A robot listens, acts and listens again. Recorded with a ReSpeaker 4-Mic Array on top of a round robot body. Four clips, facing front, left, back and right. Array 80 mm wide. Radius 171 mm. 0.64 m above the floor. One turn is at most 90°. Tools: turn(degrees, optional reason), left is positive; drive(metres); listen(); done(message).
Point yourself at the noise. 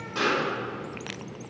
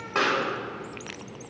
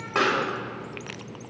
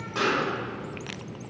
turn(degrees=90, reason="The pop: 145° left.")
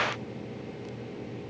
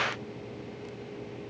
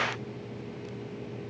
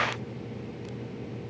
turn(degrees=55, reason="Nothing new. It was at 55° left.")
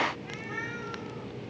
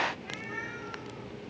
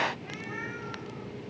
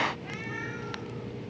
done("Facing where the pop came from. I can't hear it now.")